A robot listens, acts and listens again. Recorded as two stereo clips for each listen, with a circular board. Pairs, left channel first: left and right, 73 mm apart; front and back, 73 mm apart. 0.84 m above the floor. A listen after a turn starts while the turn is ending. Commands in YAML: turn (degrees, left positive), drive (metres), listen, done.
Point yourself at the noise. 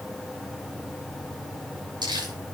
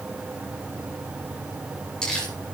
turn: -80
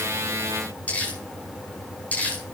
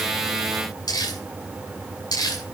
turn: 20
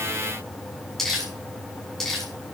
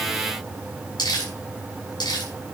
done: "Found it: crumpling, straight ahead, over 4 m away."